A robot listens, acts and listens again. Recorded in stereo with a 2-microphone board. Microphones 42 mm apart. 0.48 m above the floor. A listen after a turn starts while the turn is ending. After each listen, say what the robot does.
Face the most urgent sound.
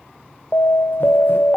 Turn 60° left.
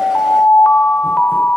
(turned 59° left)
Turn 30° left.
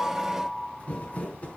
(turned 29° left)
Keep listening.
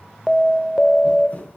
Found it: an alarm, straight ahead, 1 to 2 m away.